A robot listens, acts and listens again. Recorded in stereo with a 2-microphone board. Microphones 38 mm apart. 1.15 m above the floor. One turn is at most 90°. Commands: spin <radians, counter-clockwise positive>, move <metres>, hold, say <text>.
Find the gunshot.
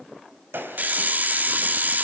spin -1.57
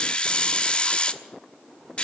say Facing where the gunshot came from. I can't hear it now.